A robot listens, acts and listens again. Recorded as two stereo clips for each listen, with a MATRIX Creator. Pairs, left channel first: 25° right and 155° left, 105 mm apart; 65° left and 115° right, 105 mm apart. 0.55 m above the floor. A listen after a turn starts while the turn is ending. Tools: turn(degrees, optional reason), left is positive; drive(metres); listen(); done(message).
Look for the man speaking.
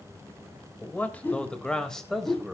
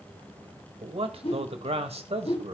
turn(degrees=-115, reason="The man speaking: 115° right.")
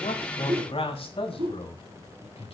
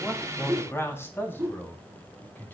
done("Facing the man speaking, 2 to 4 m away.")